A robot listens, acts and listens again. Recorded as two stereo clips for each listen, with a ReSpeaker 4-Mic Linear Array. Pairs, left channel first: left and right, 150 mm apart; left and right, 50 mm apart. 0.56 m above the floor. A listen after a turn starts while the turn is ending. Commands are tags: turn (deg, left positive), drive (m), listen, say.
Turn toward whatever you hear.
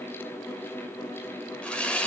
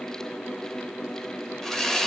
<turn deg="30"/>
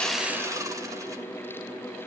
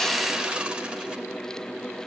<turn deg="-25"/>
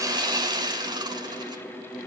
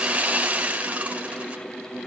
<turn deg="-30"/>
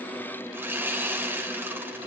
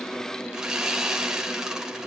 <turn deg="-15"/>
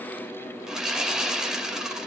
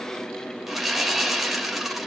<say>Facing the sawing.</say>